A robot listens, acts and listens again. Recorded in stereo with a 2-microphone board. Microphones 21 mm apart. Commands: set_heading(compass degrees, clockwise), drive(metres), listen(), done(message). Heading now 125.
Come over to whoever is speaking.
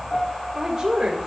set_heading(145)
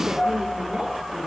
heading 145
listen()
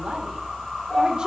set_heading(285)
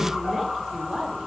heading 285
set_heading(320)
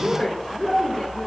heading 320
set_heading(305)
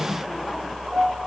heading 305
listen()
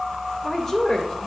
drive(1.0)
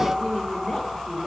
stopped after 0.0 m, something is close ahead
done("Something is in my way. I am facing the woman speaking but have not reached it.")